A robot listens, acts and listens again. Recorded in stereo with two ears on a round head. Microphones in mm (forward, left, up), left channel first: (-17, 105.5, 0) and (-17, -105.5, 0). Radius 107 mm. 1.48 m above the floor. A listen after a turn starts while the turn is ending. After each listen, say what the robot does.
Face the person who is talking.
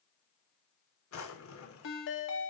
Keep listening.
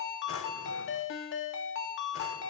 Keep listening.
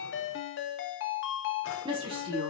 Turn 25° right.
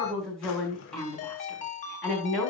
Found it: a woman speaking, straight ahead, over 4 m away.